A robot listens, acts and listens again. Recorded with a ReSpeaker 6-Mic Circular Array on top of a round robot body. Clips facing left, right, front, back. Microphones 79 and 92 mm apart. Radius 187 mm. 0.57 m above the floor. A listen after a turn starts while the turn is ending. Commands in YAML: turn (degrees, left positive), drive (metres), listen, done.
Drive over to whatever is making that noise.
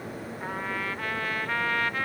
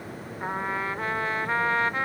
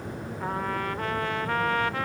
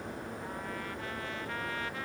turn: -25
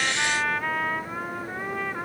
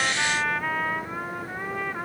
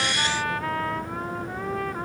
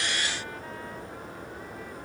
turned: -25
drive: 1.0
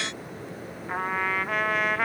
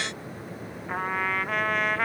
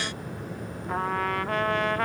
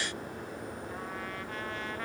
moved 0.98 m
drive: 1.0
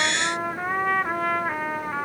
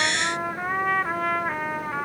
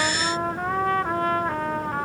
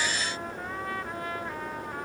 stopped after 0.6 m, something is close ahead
done: "Arrived at the trumpet, straight ahead."